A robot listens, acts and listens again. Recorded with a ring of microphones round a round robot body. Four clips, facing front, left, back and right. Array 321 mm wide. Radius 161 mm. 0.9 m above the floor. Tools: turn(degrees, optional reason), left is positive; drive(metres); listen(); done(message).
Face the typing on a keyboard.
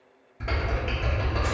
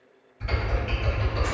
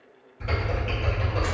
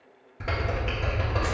turn(degrees=-70, reason="The typing on a keyboard: 70° right.")
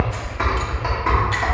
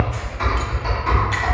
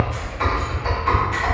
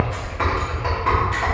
turn(degrees=-30, reason="The typing on a keyboard is now 30° right.")
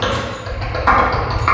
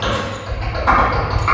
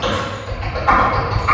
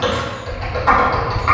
done("Facing the typing on a keyboard, 1 to 2 m away.")